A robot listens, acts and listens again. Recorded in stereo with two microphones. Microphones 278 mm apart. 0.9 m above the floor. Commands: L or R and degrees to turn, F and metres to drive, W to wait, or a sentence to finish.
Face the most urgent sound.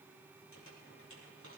W
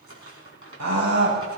R90
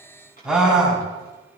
Facing the scream, over 4 m away.